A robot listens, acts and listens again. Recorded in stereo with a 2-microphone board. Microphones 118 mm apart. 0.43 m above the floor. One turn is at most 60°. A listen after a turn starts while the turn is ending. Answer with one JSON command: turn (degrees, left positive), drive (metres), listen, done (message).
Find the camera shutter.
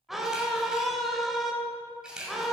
{"turn": -30}
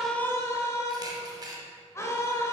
{"turn": -60}
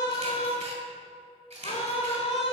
{"turn": -60}
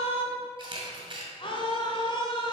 {"turn": -50}
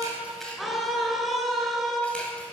{"turn": 10}
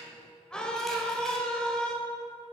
{"listen": true}
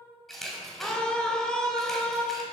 {"done": "Found it: a camera shutter, straight ahead, 1 to 2 m away."}